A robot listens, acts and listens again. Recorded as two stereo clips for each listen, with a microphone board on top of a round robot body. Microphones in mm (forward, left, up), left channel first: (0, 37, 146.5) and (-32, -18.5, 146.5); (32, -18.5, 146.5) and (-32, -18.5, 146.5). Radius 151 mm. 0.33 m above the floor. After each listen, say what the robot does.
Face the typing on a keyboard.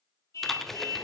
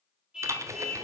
Turn 145° left.
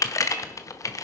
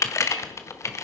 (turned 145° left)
Turn 35° left.
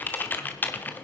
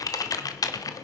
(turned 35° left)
Found it: typing on a keyboard, straight ahead, 1 to 2 m away.